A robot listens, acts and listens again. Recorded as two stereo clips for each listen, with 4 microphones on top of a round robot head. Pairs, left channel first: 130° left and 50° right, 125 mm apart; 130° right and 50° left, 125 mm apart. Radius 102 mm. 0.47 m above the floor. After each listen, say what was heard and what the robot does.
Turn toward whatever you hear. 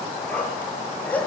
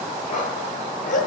The dog barking: 155° right. Turn 155° right.
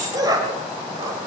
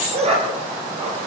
The dog barking is now 10° left. Turn 10° left.
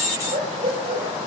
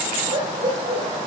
Facing the dog barking, over 4 m away.